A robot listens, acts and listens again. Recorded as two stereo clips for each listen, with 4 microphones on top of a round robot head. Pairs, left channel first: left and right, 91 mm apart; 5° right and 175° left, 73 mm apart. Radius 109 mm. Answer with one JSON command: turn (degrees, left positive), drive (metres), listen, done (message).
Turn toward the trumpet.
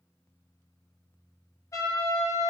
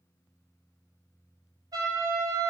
{"turn": 140}
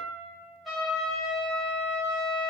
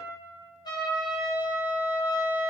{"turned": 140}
{"done": "Facing the trumpet, 2 to 4 m away."}